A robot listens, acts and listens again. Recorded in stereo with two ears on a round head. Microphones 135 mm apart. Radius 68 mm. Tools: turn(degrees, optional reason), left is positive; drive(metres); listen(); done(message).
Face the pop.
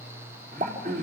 turn(degrees=-50, reason="The pop: about 50° right or 130° right.")
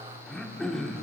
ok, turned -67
listen()
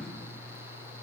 done("I heard a pop, but can't make it out now. It was about 15° left or 65° right.")